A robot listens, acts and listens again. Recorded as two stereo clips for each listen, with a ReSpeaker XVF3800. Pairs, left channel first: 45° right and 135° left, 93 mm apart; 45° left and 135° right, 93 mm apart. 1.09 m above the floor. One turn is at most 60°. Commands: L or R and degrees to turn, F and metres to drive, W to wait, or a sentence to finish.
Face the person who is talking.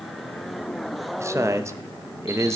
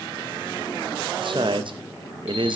R60
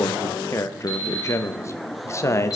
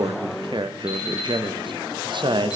R60
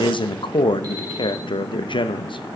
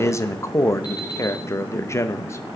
R15
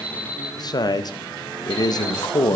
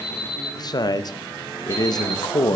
Found it: a man speaking, straight ahead.